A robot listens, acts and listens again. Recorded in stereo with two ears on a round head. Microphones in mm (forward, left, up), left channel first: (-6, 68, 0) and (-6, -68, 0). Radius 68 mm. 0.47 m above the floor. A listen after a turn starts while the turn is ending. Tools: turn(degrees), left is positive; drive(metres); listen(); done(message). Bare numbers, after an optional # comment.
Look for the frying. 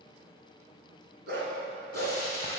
# The frying: about 20° left or 160° left.
turn(20)
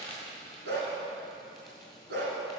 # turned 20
done("Found it: frying, straight ahead, 2 to 4 m away.")